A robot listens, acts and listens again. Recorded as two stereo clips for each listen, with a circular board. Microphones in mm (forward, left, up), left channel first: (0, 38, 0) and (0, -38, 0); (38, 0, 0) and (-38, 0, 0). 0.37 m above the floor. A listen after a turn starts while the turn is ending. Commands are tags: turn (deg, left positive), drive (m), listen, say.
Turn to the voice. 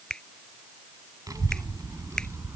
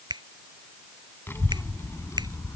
<turn deg="-40"/>
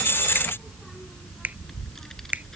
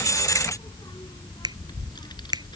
<turn deg="10"/>
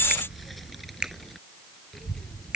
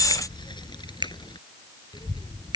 <say>Facing the child speaking.</say>